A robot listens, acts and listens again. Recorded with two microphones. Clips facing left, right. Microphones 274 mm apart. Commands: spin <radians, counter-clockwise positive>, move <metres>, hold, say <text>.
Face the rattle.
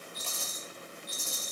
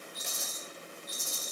spin 1.57
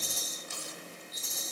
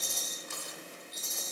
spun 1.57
say Found it: a rattle, straight ahead, 2 to 4 m away.